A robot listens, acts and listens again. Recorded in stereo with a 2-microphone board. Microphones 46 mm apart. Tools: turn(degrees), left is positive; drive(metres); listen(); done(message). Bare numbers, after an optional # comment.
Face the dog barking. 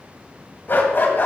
# The dog barking: about 50° left or 130° left.
turn(50)
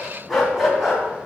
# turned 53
done("Found it: a dog barking, straight ahead.")